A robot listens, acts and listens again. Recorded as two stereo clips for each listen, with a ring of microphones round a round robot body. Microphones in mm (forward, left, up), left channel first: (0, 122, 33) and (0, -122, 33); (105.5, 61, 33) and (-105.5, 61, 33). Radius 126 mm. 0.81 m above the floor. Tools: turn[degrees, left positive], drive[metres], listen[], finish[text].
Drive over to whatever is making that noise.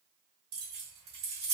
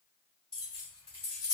Thought: The keys jangling: 95° right.
Action: turn[-95]
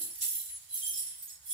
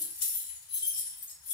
Thought: The keys jangling is now 20° right.
Action: turn[-20]
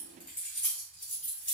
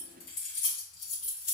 Action: drive[1.0]
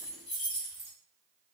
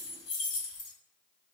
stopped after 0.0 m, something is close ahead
Action: finish[Something is in my way. I am facing the keys jangling but have not reached it.]